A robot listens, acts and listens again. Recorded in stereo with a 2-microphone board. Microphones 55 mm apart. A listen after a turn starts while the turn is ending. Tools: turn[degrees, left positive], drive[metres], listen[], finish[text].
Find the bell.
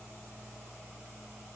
Action: listen[]
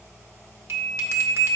Thought: The bell: about 55° right or 125° right.
Action: turn[-55]
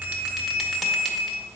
Action: finish[Facing the bell.]